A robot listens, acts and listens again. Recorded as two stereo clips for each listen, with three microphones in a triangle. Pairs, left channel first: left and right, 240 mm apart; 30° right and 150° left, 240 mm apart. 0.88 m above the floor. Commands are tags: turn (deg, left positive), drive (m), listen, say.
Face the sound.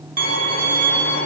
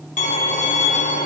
<turn deg="-85"/>
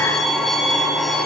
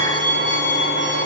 <say>Facing the violin, 1 to 2 m away.</say>